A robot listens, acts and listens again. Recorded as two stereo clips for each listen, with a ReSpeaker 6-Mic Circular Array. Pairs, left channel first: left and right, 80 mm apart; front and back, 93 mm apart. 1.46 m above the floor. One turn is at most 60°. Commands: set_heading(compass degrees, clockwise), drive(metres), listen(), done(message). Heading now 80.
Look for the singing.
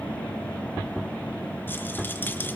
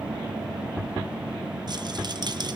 listen()
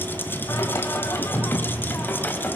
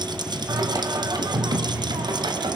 set_heading(20)
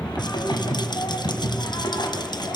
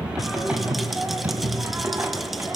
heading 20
set_heading(320)
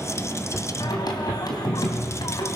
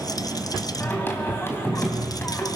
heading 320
set_heading(260)
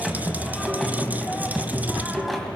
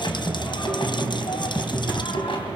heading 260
done("Facing the singing.")